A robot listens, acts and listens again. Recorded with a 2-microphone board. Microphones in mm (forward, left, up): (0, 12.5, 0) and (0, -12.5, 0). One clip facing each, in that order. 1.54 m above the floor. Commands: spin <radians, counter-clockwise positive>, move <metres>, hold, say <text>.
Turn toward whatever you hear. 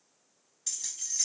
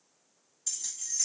spin 0.70
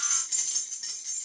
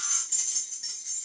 spin 0.61
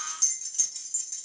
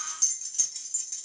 spin -0.26
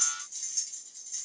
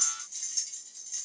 spin -0.44
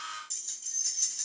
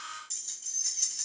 say Found it: keys jangling, straight ahead.